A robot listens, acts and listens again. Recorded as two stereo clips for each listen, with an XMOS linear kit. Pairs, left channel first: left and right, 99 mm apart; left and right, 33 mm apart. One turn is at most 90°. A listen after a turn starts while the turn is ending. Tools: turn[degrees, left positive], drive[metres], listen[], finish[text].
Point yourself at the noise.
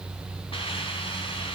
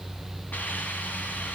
Thought: The hiss: about 65° left or 115° left.
Action: turn[65]
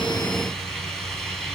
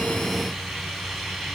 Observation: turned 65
Action: finish[Facing the hiss.]